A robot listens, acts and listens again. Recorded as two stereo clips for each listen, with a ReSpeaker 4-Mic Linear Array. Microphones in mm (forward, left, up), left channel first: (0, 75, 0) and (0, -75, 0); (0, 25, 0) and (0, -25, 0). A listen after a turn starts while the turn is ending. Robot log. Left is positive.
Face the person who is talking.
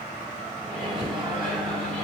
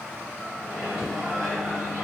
cmd idle
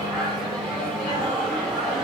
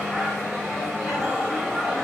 cmd idle
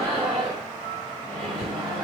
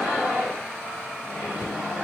end: I can't make out anyone speaking to turn to.